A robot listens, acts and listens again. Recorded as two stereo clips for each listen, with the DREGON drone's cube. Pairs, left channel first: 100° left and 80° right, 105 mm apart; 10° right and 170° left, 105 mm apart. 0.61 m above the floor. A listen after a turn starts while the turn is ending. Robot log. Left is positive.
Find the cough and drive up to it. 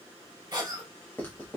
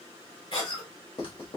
note: The cough: 30° right.
cmd yaw -30
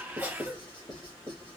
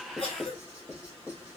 cmd fwd 1.0
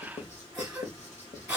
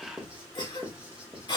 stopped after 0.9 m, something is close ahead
note: The cough is now 10° right.
cmd yaw -10
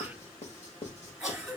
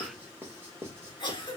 end: Arrived at the cough, straight ahead.